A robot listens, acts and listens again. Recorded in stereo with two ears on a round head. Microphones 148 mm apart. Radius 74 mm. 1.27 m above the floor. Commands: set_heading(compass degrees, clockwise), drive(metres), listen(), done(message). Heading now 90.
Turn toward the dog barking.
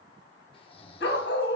set_heading(20)
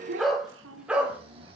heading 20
set_heading(30)
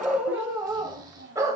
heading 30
set_heading(50)
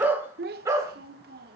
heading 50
set_heading(70)
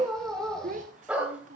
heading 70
done("Facing the dog barking, 2 to 4 m away.")